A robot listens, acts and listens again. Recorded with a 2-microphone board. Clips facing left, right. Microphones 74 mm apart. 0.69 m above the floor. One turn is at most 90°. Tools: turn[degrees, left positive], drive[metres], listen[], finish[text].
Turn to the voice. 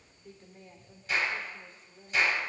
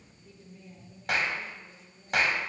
Thought: The woman speaking: about 50° left or 130° left.
Action: turn[50]
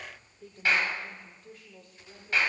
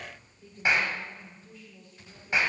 Thought: So it is at 75° left.
Action: turn[75]
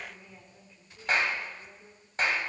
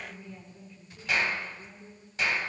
Thought: The woman speaking is now 10° left.
Action: turn[10]
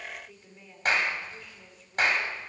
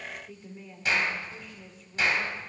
Action: finish[Found it: a woman speaking, straight ahead, 2 to 4 m away.]